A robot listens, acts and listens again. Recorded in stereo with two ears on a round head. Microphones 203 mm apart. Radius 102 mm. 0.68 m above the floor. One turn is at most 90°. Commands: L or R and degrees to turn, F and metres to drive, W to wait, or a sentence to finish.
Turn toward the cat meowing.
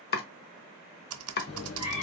L65
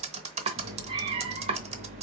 R40
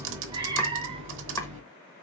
R30
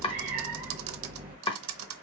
R25
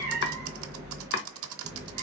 Found it: a cat meowing, straight ahead, 1 to 2 m away.